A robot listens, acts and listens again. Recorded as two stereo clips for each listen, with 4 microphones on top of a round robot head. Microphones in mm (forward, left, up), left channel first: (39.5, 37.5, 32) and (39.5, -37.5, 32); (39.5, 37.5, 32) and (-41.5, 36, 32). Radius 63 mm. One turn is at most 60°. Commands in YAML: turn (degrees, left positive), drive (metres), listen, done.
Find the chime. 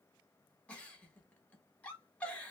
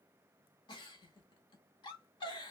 listen: true
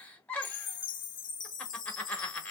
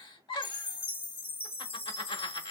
turn: 60
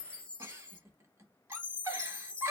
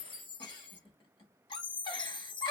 turn: 15
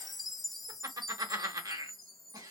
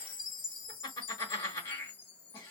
done: "Found it: a chime, straight ahead."